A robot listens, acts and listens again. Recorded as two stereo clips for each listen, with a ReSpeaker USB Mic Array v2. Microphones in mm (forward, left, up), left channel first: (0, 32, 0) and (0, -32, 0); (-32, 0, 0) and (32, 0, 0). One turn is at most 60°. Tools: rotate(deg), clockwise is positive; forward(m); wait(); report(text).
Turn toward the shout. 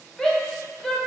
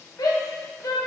rotate(-60)
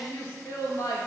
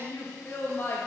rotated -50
rotate(-60)
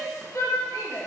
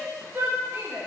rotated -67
rotate(-55)
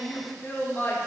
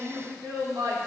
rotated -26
rotate(-25)
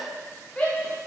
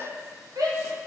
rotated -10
rotate(-15)
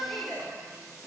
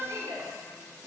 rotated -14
report("Found it: a shout, straight ahead, under 1 m away.")